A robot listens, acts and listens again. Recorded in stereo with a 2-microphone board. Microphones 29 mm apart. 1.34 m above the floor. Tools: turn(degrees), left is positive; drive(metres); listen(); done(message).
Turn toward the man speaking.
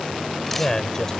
turn(degrees=15)
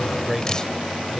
turn(degrees=30)
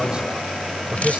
turn(degrees=-30)
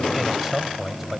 turn(degrees=-10)
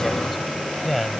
done("Found it: a man speaking, straight ahead.")